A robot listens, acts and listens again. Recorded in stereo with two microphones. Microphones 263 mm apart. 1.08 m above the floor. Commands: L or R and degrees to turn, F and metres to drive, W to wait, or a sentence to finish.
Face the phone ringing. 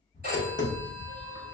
R35
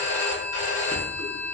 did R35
R105
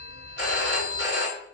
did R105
R50
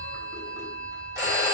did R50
R15
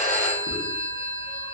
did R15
Found it: a phone ringing, straight ahead, 1 to 2 m away.